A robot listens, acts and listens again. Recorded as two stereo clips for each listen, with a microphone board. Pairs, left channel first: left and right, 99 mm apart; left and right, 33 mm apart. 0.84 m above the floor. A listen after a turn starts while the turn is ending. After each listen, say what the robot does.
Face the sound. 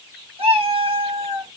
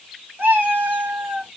Turn 75° right.
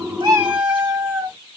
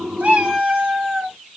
Turn 20° right.
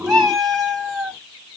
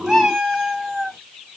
Facing the cat meowing, 1 to 2 m away.